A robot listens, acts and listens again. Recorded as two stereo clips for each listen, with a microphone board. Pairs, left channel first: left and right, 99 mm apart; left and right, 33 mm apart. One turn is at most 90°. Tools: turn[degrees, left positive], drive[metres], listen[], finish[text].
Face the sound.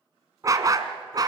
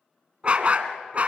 Thought: The dog barking: about 45° right or 135° right.
Action: turn[-45]
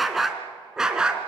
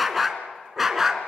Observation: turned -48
Thought: So it is at 10° right.
Action: turn[-10]
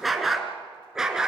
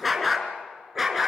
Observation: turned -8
Thought: The dog barking is now 10° right.
Action: turn[-10]
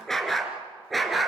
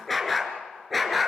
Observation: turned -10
Action: finish[Found it: a dog barking, straight ahead.]